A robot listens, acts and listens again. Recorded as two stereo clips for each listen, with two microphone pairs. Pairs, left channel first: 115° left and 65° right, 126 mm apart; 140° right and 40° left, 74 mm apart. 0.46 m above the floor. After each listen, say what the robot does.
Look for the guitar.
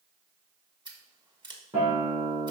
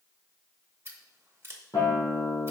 Turn 95° right.
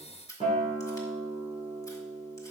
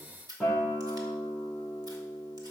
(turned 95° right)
Turn 30° right.
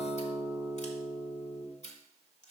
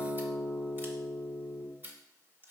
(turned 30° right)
Turn 15° left.
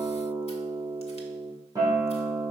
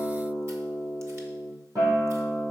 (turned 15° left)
Facing the guitar.